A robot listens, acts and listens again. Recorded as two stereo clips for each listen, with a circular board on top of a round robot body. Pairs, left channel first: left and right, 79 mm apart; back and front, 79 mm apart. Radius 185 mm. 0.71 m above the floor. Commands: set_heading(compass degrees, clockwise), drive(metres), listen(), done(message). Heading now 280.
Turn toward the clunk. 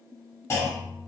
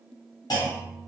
set_heading(135)
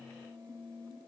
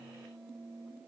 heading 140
done("Facing where the clunk came from. I can't hear it now.")